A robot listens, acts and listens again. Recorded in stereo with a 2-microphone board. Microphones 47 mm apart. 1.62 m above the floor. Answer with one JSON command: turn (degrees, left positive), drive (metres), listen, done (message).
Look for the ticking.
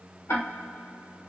{"turn": 90}
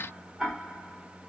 {"done": "Facing the ticking, 1 to 2 m away."}